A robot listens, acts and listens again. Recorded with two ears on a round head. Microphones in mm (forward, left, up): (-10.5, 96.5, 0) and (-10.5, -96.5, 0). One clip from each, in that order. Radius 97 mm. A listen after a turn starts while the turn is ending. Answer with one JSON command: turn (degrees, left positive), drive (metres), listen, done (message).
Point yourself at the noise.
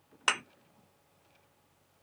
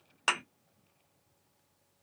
{"turn": 30}
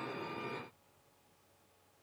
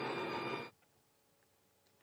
{"listen": true}
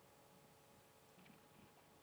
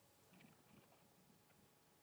{"done": "I heard a thud, but can't make it out now. It was about 30° right or 150° left."}